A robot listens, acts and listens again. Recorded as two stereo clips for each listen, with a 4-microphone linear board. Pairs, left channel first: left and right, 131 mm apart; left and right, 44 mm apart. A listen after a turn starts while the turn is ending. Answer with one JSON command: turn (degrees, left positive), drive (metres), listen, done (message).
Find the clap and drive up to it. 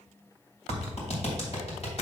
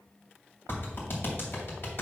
{"turn": 55}
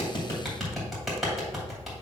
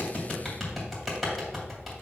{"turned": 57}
{"drive": 1.0}
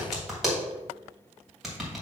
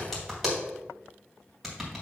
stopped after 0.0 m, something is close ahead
{"done": "Something is in my way. I am facing the clap but have not reached it."}